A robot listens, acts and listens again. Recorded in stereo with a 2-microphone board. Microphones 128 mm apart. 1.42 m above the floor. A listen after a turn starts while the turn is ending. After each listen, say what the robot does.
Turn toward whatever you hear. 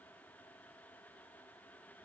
Keep listening.
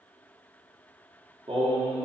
Turn 45° right.
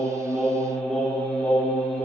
Facing the singing, over 4 m away.